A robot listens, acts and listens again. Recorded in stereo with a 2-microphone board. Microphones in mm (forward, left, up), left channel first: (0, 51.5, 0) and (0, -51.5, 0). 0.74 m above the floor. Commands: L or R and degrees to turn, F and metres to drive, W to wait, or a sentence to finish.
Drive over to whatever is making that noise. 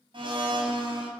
R55
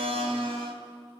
R65
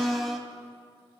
F1.0
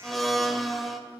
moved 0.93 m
F1.0
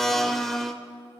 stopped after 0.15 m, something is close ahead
Arrived at the blender, straight ahead.